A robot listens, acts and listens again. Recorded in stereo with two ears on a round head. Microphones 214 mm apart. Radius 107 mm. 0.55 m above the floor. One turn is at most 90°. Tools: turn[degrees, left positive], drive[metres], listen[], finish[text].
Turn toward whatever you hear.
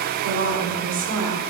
Thought: The woman speaking: about 55° right or 125° right.
Action: turn[-55]
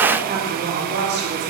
Thought: So it is at 45° right.
Action: turn[-45]
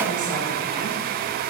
Thought: The woman speaking is now 35° right.
Action: turn[-35]
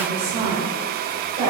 Thought: The woman speaking is now 30° right.
Action: turn[-30]
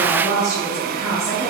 Thought: The woman speaking is now 15° left.
Action: turn[15]
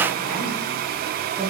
Action: finish[Facing the woman speaking.]